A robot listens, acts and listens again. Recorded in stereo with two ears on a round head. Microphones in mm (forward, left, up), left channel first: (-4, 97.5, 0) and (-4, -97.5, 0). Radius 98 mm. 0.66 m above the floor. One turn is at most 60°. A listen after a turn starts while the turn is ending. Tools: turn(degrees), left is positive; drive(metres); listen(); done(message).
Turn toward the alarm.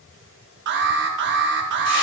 turn(degrees=-55)
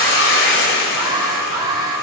turn(degrees=-20)
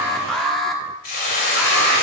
done("Facing the alarm.")